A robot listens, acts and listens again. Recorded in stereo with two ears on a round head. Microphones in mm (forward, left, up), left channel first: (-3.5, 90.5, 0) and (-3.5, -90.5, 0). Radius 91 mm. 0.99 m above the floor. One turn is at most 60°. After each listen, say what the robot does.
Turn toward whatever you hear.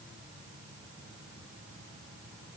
Keep listening.
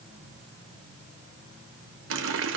Turn 60° right.
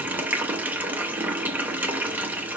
Turn 10° right.
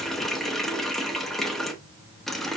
Found it: a running tap, straight ahead.